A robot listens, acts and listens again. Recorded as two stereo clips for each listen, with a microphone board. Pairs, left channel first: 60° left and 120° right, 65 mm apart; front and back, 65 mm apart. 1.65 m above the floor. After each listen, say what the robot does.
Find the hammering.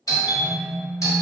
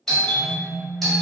Keep listening.
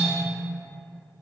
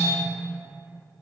Keep listening.
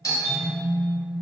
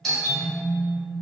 I can't make out hammering, only a doorbell and a phone buzzing.